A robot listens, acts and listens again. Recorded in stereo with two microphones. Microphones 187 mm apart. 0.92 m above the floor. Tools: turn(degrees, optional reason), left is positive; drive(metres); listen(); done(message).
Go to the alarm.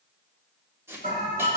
turn(degrees=-45, reason="The alarm: about 45° right or 135° right.")
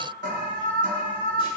turn(degrees=-85, reason="So it is at 85° right.")
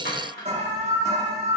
turn(degrees=-40, reason="The alarm is now 40° right.")
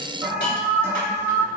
turn(degrees=-15, reason="The alarm is now 15° right.")
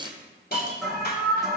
drive(metres=1.0)
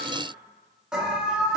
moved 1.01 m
drive(metres=1.0)
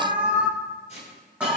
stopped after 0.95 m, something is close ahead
turn(degrees=-10, reason="The alarm is now 10° right.")
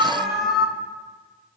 done("Arrived at the alarm, straight ahead.")